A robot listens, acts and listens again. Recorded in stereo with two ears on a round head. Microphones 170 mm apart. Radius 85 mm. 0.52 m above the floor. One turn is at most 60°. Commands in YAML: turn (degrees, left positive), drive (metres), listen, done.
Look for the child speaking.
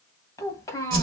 turn: 20
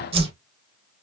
listen: true
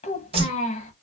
turn: 60
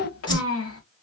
turn: 60
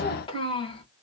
turn: 25
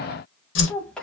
done: "Facing the child speaking, 1 to 2 m away."